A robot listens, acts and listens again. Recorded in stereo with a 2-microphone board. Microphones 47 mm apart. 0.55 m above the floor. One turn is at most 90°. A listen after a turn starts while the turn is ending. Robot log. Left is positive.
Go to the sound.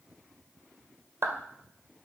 note: The clap: about 55° right or 125° right.
cmd yaw -55
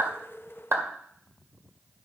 note: So it is at 60° right.
cmd yaw -60
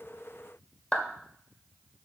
note: The clap is now 15° left.
cmd yaw +15
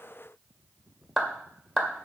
cmd fwd 1.0
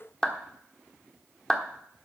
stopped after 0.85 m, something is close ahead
note: The clap is now 10° left.
cmd yaw +10
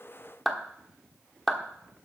end: I am next to the clap.